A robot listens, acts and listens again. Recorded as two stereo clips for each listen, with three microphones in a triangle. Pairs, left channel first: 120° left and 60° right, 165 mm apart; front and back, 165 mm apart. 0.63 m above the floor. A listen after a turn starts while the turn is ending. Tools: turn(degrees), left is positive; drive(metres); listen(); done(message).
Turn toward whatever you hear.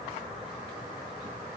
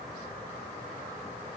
listen()
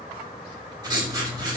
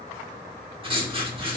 turn(degrees=-125)
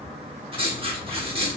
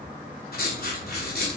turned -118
done("Found it: writing, straight ahead, under 1 m away.")